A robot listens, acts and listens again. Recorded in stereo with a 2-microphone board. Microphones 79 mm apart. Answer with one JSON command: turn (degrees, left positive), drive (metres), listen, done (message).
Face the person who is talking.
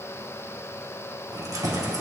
{"listen": true}
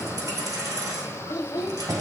{"turn": 60}
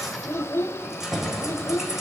{"turn": 40}
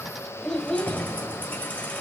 {"turn": 10}
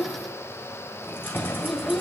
{"done": "Found it: a child speaking, straight ahead, under 1 m away."}